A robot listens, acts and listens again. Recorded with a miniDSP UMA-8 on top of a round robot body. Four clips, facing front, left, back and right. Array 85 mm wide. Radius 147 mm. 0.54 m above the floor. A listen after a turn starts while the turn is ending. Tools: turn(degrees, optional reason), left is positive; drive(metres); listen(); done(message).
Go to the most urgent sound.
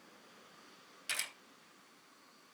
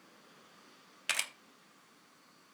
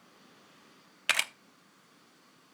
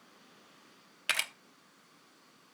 listen()
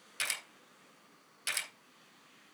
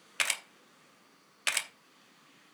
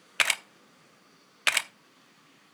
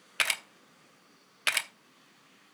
listen()
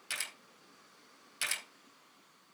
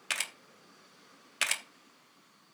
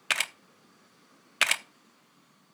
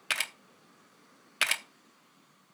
done("I can't make out anything urgent, only a camera shutter.")